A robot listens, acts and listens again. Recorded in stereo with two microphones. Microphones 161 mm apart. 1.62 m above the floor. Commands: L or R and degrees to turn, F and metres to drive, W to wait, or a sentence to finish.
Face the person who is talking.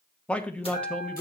L30
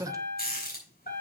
R20
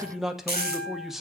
Facing the man speaking, 1 to 2 m away.